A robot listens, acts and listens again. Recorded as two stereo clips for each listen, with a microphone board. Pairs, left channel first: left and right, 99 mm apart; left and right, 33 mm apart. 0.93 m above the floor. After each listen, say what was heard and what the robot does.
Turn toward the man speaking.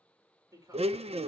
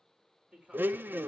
The man speaking: about 35° right or 145° right. Turn 35° right.
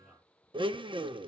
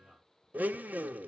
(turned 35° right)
Found it: a man speaking, straight ahead, 2 to 4 m away.